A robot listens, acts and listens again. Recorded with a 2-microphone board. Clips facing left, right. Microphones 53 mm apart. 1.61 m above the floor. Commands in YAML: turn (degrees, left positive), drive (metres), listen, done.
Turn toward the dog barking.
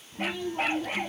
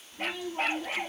turn: 30
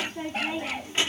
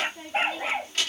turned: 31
turn: -25
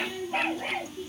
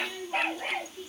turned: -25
done: "Facing the dog barking."